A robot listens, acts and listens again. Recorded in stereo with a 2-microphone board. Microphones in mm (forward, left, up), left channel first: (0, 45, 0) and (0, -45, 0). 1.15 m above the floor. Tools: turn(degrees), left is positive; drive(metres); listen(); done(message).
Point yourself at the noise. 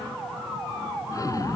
turn(degrees=35)
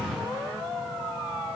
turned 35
done("Found it: an explosion, straight ahead.")